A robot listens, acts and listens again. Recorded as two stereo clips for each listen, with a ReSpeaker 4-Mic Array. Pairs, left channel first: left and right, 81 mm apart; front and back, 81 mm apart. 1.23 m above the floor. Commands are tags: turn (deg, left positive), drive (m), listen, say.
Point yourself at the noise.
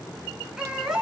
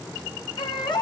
<say>Found it: a baby crying, straight ahead, over 4 m away.</say>